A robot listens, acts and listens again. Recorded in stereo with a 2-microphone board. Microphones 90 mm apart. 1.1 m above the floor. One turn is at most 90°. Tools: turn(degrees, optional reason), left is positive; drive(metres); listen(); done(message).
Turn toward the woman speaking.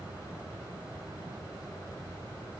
listen()
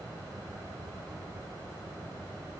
listen()
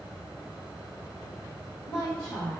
turn(degrees=30, reason="The woman speaking: about 30° left or 150° left.")
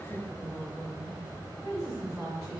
done("Found it: a woman speaking, straight ahead, 2 to 4 m away.")